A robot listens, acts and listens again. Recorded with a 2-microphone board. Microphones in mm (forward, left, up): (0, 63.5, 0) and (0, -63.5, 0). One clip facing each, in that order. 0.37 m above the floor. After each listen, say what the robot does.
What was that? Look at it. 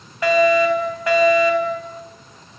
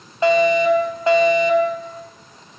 Turn 25° right.
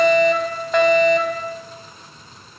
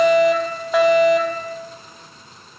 Found it: a fire alarm, straight ahead, over 4 m away.